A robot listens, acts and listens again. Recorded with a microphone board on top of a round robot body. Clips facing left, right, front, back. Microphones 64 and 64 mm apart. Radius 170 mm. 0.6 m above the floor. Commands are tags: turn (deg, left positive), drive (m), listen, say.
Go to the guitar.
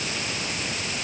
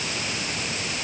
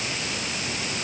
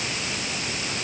<listen/>
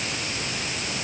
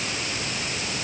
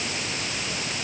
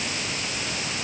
<listen/>
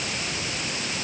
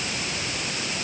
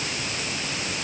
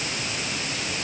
<say>I can't make out a guitar to turn to.</say>